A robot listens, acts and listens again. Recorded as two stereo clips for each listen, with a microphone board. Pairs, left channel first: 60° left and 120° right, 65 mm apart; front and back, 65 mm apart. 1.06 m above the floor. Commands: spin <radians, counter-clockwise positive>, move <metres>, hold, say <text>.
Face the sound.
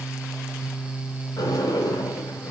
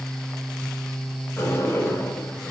spin 0.87
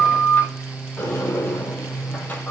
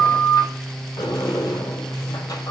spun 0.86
say Found it: a sliding door, straight ahead, 2 to 4 m away.